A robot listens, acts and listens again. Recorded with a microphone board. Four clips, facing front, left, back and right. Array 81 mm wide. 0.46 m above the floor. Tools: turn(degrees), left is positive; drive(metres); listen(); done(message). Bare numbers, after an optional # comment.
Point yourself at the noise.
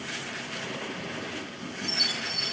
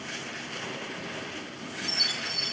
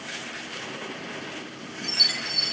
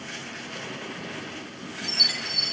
# The chime: 140° right.
turn(-140)
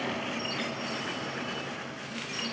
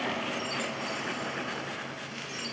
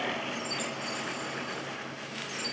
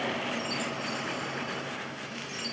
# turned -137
done("Found it: a chime, straight ahead.")